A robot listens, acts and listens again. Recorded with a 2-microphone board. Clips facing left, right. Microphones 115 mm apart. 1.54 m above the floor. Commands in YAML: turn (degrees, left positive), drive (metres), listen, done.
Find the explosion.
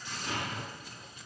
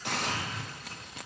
turn: 70
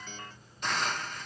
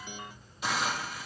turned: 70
listen: true
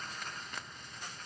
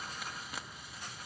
done: "I heard an explosion, but can't make it out now. It was about straight ahead or 40° left."